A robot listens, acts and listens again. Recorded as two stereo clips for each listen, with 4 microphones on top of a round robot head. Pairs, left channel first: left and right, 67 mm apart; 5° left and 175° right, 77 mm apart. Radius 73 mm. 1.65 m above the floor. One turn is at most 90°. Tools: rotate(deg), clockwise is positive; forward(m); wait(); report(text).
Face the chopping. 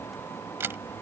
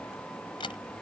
wait()
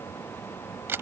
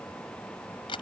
wait()
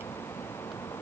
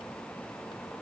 report("I can't make out chopping, only a camera shutter.")